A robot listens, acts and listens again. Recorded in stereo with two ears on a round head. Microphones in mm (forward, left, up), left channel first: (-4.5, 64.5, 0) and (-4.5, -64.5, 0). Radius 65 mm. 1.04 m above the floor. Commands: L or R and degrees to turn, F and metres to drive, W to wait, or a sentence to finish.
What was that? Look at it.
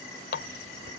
L90
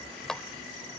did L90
Facing the running tap.